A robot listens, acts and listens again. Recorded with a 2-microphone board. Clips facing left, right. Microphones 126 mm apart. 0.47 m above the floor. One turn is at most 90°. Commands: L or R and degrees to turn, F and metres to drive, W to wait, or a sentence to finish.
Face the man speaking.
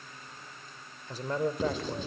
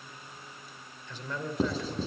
L45
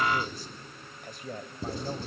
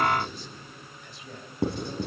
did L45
L55
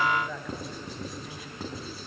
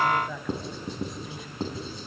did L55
Facing the man speaking, 2 to 4 m away.